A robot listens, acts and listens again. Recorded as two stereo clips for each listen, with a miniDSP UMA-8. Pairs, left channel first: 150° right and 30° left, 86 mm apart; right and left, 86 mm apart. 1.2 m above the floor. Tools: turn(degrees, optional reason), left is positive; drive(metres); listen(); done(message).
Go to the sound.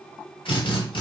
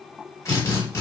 turn(degrees=-145, reason="The drill: 145° right.")
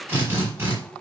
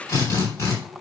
turn(degrees=-35, reason="The drill is now 35° right.")
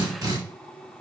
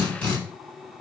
turn(degrees=-10, reason="The drill is now 10° right.")
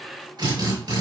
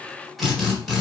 drive(metres=1.0)
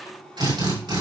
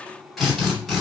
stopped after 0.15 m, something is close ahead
done("Something is in my way. I am facing the drill but have not reached it.")